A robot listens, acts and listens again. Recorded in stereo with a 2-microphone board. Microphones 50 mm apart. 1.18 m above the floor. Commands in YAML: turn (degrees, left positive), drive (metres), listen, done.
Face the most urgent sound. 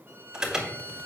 turn: -30
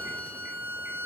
listen: true
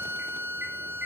listen: true
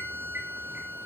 done: "I heard an alarm, but can't make it out now. It was about 15° left or 135° right."